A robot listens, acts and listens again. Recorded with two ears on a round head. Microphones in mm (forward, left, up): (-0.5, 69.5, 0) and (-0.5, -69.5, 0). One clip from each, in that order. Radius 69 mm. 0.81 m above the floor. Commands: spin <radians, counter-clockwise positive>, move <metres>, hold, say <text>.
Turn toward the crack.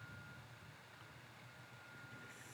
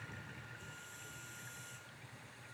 hold
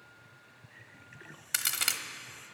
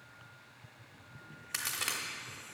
spin 0.61
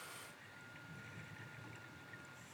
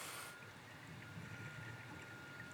hold
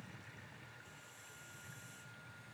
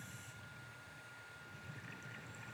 say I heard a crack, but can't make it out now. It was about straight ahead or 110° left.